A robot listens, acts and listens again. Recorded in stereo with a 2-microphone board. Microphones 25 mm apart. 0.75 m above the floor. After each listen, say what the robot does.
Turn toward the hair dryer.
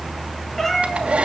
Turn 90° right.
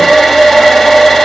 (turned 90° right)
Turn 15° left.
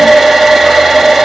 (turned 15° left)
Found it: a hair dryer, straight ahead, 2 to 4 m away.